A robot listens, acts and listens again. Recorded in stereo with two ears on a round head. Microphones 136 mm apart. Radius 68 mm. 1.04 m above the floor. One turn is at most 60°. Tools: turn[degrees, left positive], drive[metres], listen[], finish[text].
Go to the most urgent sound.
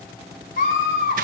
Thought: The scream: about 65° left or 115° left.
Action: turn[60]
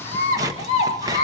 Thought: So it is at 55° left.
Action: turn[55]
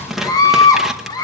Thought: The scream is now 30° left.
Action: turn[30]
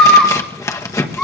Action: drive[1.0]
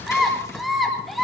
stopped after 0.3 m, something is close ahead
Action: finish[Blocked. The scream is further on, straight ahead.]